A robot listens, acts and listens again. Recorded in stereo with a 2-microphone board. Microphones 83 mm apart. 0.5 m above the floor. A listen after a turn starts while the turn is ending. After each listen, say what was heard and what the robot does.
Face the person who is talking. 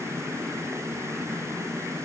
Keep listening.
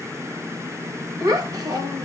The child speaking: about 50° right or 130° right. Turn 50° right.
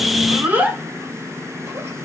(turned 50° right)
So it is at 20° right. Turn 20° right.
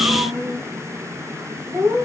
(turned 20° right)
The child speaking is now 25° right. Turn 25° right.
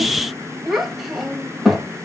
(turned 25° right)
Found it: a child speaking, straight ahead, 1 to 2 m away.